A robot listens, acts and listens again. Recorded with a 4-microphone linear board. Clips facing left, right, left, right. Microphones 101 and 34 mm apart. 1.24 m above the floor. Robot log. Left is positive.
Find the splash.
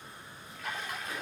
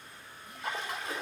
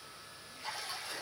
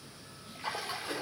note: The splash: about 30° right or 150° right.
cmd yaw -30
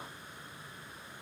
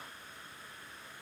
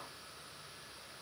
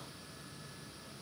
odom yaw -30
cmd idle
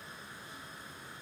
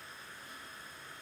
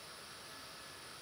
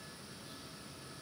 end: I heard a splash, but can't make it out now. It was about straight ahead or 120° right.